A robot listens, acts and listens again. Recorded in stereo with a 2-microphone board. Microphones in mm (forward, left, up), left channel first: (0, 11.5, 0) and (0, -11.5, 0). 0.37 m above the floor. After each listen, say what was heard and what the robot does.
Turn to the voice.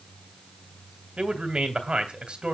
The man speaking: about 50° right or 130° right. Turn 50° right.
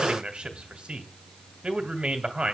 So it is at 65° right. Turn 65° right.
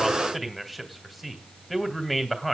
Found it: a man speaking, straight ahead, 2 to 4 m away.